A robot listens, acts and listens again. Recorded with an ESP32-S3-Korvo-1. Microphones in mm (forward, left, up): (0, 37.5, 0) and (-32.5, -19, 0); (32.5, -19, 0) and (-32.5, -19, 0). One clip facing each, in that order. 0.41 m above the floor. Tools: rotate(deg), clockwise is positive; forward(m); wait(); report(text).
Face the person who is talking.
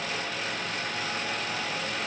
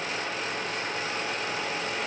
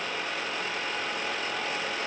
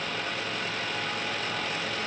wait()
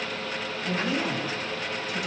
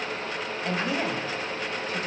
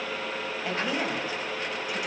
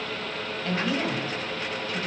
rotate(75)
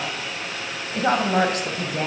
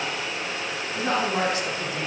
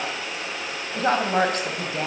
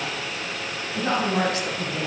rotate(-35)
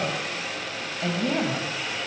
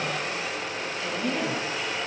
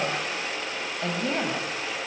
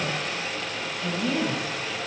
rotate(-30)
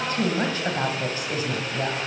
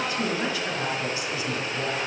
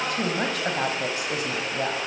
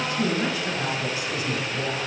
rotate(-15)
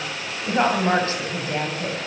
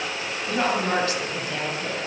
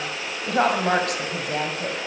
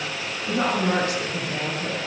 report("Found it: a woman speaking, straight ahead.")